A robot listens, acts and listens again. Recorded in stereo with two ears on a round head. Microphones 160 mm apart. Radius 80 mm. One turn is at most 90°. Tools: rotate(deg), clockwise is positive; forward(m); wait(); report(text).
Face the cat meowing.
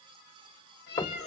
rotate(-65)
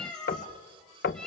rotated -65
report("Found it: a cat meowing, straight ahead, over 4 m away.")